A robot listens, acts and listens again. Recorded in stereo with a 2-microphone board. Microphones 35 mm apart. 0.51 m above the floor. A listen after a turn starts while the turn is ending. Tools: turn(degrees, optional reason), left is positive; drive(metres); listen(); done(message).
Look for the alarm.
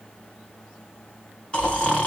listen()
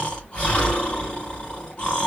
listen()
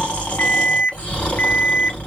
turn(degrees=50, reason="The alarm: about 50° left or 130° left.")
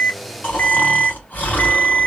turn(degrees=65, reason="So it is at 65° left.")
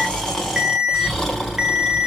done("Found it: an alarm, straight ahead.")